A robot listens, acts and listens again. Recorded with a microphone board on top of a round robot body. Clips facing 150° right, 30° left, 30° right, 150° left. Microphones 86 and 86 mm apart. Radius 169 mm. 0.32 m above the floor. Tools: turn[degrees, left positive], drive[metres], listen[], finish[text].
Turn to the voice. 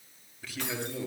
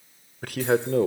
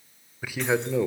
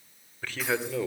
Thought: The man speaking: 50° left.
Action: turn[50]
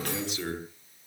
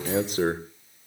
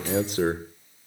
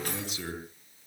Action: finish[Found it: a man speaking, straight ahead.]